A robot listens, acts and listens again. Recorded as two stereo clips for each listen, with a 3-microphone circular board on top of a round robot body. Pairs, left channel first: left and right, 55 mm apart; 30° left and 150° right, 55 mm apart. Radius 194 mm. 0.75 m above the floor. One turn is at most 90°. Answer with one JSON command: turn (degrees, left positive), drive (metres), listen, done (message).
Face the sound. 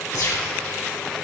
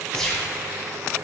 {"turn": 90}
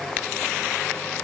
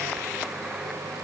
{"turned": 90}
{"turn": 20}
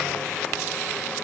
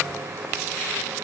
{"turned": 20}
{"done": "I heard a gunshot from this way, but can't make it out now."}